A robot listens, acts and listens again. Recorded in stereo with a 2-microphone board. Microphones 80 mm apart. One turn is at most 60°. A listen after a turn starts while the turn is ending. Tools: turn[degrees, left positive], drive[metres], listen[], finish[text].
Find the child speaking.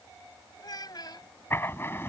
Thought: The child speaking: about 60° left or 120° left.
Action: turn[60]
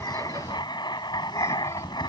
Action: listen[]
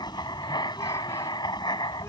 Action: listen[]
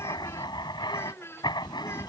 Thought: So it is at 30° left.
Action: turn[30]
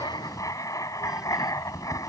Action: listen[]
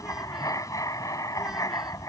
Action: listen[]
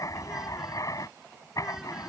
Action: finish[Facing where the child speaking came from. I can't hear it now.]